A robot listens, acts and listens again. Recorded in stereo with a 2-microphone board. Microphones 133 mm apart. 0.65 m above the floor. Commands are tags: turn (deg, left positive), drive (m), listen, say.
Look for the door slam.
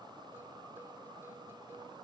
<listen/>
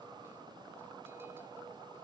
<listen/>
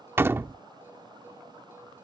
<turn deg="-20"/>
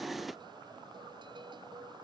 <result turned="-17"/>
<listen/>
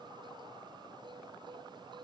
<say>I heard a door slam, but can't make it out now. It was about straight ahead or 145° right.</say>